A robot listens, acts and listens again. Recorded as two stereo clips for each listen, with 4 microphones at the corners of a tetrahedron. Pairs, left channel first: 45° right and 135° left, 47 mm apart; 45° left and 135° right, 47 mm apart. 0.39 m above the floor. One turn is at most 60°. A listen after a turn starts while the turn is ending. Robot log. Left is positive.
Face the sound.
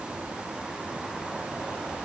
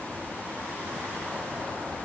cmd idle
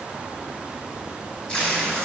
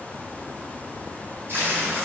note: The tape being pulled: 110° right.
cmd yaw -60
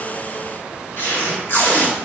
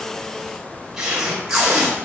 note: The tape being pulled is now 55° right.
cmd yaw -55
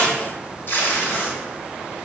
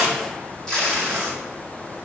note: The tape being pulled is now 30° right.
cmd yaw -30
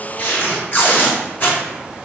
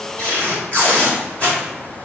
end: Facing the tape being pulled, 1 to 2 m away.